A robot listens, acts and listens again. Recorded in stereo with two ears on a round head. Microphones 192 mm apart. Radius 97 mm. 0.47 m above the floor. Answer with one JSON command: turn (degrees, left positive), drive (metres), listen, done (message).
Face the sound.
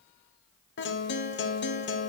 {"turn": 55}
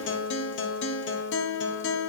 {"turn": 60}
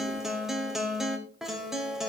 {"done": "Found it: a guitar, straight ahead."}